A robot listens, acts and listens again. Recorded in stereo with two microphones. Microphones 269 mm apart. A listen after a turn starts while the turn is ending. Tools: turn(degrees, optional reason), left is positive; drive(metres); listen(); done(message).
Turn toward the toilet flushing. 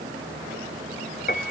listen()
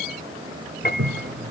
turn(degrees=-55, reason="The toilet flushing: about 55° right or 125° right.")
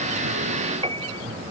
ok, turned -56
listen()
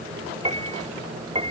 listen()
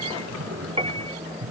turn(degrees=-65, reason="So it is at 65° right.")
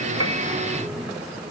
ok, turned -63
done("Facing the toilet flushing.")